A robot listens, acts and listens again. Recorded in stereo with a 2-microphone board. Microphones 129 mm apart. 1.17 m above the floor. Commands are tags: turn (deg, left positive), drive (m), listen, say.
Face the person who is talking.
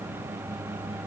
<listen/>
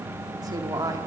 <turn deg="-30"/>
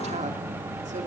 <listen/>
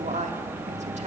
<turn deg="-120"/>
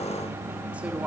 <listen/>
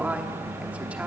<turn deg="-10"/>
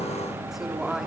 <say>Found it: a woman speaking, straight ahead.</say>